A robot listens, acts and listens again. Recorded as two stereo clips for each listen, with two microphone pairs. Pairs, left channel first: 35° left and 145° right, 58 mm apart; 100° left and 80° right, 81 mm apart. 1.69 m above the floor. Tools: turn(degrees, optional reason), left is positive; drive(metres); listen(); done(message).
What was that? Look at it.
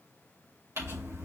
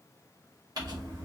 turn(degrees=-115, reason="The crumpling: 115° right.")
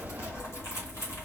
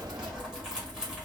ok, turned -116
done("Found it: crumpling, straight ahead, 2 to 4 m away.")